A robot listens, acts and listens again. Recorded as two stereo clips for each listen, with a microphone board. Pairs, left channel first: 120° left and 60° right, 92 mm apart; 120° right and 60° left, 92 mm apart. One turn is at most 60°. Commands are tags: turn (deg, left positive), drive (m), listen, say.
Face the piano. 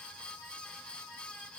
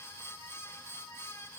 <listen/>
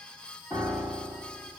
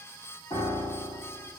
<turn deg="-60"/>
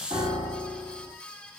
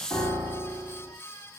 <turn deg="-55"/>
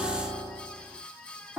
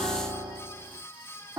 <say>Found it: a piano, straight ahead, 1 to 2 m away.</say>